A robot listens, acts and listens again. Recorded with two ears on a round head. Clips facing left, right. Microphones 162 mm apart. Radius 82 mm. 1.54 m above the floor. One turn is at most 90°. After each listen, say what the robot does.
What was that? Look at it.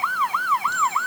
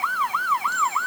Keep listening.
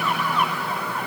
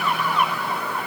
Keep listening.
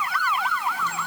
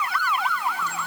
I can't make out anything to turn to.